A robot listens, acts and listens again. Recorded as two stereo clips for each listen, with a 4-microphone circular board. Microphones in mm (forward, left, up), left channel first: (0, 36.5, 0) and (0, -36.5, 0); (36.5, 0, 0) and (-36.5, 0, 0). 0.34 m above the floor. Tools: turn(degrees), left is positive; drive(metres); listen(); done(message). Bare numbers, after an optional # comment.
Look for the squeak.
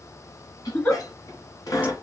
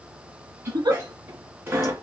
# The squeak: 125° left.
turn(125)
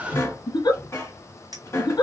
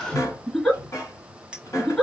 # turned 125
# The squeak is now 45° left.
turn(45)
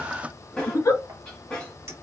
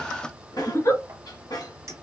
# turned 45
# The squeak is now 15° left.
turn(15)
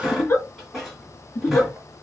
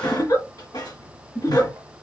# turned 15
done("Facing the squeak, 2 to 4 m away.")